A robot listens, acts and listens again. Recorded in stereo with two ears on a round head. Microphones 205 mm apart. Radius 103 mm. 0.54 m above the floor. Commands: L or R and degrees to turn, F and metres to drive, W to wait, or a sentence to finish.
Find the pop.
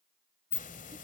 W
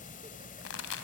L60
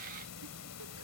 W
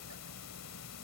I heard a pop, but can't make it out now. It was about straight ahead or 60° left.